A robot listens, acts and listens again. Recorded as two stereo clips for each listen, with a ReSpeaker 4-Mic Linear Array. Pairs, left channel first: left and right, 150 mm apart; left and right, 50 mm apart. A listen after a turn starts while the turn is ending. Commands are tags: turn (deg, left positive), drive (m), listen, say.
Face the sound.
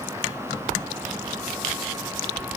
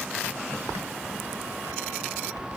<listen/>
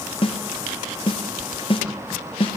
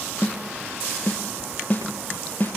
<turn deg="35"/>
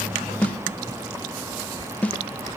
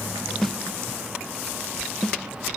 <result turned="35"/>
<turn deg="10"/>
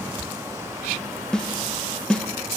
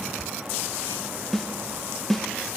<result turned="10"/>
<say>Found it: a snare drum, straight ahead, under 1 m away.</say>